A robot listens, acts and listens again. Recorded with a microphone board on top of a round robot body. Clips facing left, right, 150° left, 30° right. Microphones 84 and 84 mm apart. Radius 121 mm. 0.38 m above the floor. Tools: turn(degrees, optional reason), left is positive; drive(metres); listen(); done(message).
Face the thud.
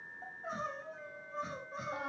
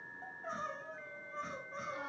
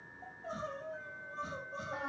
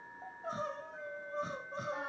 listen()
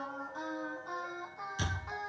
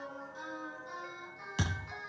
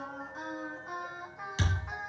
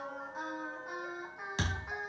turn(degrees=-85, reason="The thud: 85° right.")
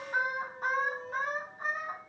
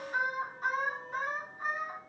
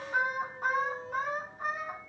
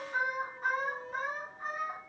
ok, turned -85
done("Facing where the thud came from. I can't hear it now.")